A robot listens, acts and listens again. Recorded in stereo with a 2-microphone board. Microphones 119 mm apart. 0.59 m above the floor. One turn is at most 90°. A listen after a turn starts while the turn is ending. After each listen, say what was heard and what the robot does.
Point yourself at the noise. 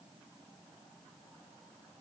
Keep listening.
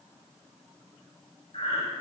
The breathing: about 55° left or 125° left. Turn 55° left.
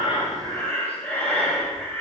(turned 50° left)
So it is at 10° left. Turn 10° left.
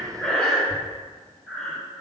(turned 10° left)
Found it: breathing, straight ahead, 2 to 4 m away.